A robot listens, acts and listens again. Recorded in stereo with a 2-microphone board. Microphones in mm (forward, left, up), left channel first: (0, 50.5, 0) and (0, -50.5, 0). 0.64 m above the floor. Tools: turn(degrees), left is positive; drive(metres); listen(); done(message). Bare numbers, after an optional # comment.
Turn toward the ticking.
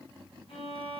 listen()
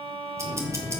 # The ticking: about 30° right or 150° right.
turn(-30)
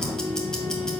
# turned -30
done("Found it: ticking, straight ahead.")